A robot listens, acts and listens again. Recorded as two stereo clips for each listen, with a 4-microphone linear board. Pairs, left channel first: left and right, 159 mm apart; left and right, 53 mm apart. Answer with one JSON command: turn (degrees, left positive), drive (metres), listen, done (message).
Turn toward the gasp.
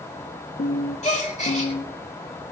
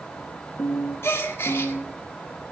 {"turn": 45}
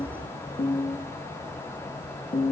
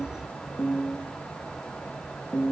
{"listen": true}
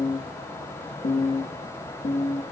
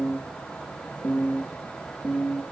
{"done": "I heard a gasp, but can't make it out now. It was about straight ahead or 90° left."}